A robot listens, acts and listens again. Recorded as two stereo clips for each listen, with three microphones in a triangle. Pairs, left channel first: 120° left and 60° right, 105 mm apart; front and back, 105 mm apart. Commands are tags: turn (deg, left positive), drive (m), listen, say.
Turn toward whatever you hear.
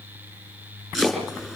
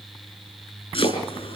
<turn deg="25"/>
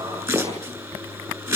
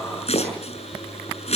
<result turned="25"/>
<say>Facing the chopping.</say>